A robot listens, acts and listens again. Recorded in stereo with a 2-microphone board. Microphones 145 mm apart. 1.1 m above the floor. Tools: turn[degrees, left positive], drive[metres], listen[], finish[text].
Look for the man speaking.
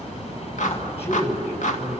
Thought: The man speaking: about 45° left or 135° left.
Action: turn[45]
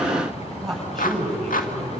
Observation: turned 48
Action: finish[Facing the man speaking, over 4 m away.]